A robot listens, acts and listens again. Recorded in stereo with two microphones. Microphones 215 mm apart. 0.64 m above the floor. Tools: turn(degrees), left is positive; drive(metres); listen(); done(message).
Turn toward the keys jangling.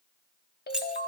turn(degrees=-30)
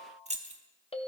turn(degrees=-145)
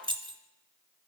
turn(degrees=-25)
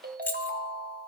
turn(degrees=10)
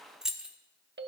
done("Found it: keys jangling, straight ahead.")